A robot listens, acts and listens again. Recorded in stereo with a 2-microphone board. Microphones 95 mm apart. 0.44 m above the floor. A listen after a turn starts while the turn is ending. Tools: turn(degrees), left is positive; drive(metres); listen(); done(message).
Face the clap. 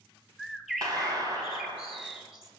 turn(degrees=-45)
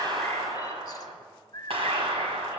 turn(degrees=-85)
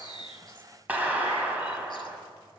turn(degrees=-15)
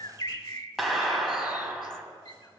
done("Facing the clap, 2 to 4 m away.")